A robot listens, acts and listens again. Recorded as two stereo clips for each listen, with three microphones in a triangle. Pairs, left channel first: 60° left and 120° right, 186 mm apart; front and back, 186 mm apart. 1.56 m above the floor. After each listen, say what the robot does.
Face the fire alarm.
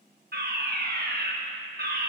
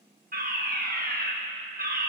Turn 145° right.
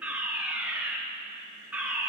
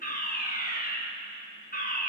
Turn 35° right.
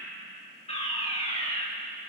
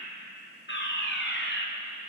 Found it: a fire alarm, straight ahead.